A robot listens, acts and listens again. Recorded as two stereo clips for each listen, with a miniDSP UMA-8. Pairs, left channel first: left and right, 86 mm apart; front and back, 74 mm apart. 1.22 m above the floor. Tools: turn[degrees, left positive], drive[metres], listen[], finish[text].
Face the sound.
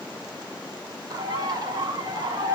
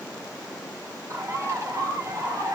Thought: The bird: 135° right.
Action: turn[-135]
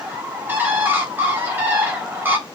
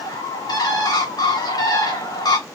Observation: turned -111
Thought: The bird is now 25° right.
Action: turn[-25]
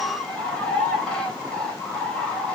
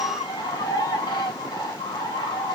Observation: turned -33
Thought: The bird is now 10° left.
Action: turn[10]
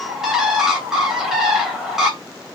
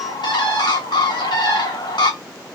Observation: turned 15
Action: finish[Facing the bird.]